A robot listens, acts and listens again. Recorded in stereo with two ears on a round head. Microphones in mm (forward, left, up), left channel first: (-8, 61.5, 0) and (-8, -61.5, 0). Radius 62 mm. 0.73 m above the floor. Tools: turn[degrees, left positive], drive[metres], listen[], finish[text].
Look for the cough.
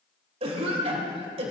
Thought: The cough: about 45° right or 135° right.
Action: turn[-45]
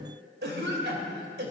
Thought: So it is at 90° right.
Action: turn[-90]
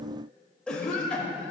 Action: finish[Found it: a cough, straight ahead, 2 to 4 m away.]